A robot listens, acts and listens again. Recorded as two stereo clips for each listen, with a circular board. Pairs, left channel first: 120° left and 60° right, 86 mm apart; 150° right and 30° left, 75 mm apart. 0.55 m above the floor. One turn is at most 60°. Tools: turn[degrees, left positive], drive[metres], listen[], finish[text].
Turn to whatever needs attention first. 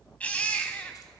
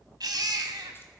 Thought: The baby crying: 45° left.
Action: turn[45]
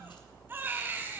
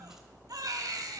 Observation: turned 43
Action: finish[Facing the baby crying.]